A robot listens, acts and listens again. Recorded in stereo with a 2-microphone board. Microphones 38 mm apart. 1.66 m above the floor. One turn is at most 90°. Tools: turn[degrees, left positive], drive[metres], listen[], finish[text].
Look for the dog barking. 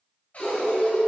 Thought: The dog barking: about 25° left or 155° left.
Action: turn[25]
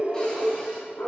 Thought: So it is at 130° left.
Action: turn[90]
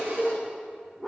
Thought: The dog barking is now 10° right.
Action: turn[-10]
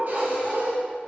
Thought: The dog barking is now 15° right.
Action: turn[-15]
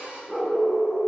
Thought: The dog barking is now 10° right.
Action: turn[-10]
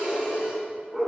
Action: finish[Facing the dog barking, 2 to 4 m away.]